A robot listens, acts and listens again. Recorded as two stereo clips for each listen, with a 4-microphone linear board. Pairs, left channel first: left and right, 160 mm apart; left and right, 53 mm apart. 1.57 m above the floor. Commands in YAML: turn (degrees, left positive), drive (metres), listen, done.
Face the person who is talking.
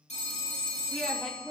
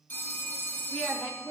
turn: -30
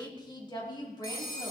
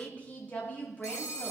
turn: 25
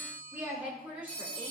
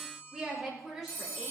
turn: -10
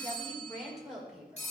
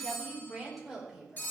done: "Facing the woman speaking, over 4 m away."